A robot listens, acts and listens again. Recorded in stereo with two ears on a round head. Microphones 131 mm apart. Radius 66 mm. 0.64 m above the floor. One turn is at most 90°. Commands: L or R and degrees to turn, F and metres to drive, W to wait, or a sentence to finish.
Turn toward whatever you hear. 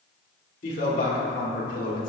L55
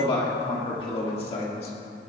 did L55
L40
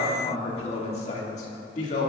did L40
L50
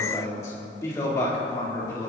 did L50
L20
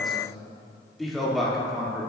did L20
Found it: a man speaking, straight ahead, 1 to 2 m away.